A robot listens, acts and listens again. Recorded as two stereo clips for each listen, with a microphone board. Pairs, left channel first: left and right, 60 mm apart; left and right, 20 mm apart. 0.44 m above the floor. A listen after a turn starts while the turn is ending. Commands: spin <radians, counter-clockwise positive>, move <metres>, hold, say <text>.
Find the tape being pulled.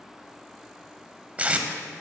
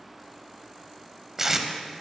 spin -0.44
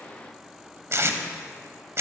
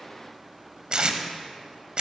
spin -2.27
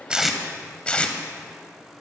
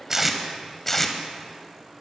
spin 0.35
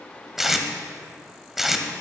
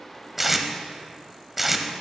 say Found it: tape being pulled, straight ahead, under 1 m away.